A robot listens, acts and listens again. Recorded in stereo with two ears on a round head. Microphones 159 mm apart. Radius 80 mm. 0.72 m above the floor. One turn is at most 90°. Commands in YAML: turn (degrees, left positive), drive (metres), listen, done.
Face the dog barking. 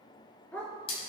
turn: 30
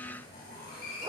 listen: true
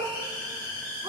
turn: -20
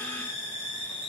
listen: true
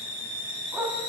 turn: -10
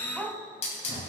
turn: -10
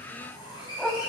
done: "Found it: a dog barking, straight ahead, 1 to 2 m away."